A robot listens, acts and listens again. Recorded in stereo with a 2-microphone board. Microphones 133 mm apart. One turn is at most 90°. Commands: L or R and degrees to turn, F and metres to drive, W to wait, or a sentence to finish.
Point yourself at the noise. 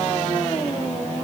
W
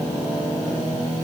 W
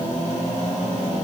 I can't make out anything to turn to.